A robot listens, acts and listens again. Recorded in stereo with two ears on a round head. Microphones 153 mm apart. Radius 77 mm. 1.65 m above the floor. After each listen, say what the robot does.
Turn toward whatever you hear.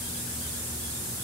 Keep listening.
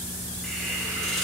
Turn 30° left.
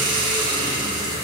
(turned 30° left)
Turn 25° right.
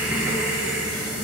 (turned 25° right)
Facing the hiss.